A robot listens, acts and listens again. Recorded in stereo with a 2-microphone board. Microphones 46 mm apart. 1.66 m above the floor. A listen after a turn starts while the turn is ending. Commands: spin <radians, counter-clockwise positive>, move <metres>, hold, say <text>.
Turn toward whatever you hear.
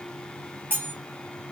spin -0.79
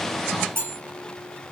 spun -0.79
spin -1.40
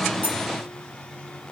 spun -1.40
hold
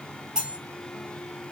spin -0.35
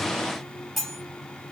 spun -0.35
say Facing the cutlery clinking, 1 to 2 m away.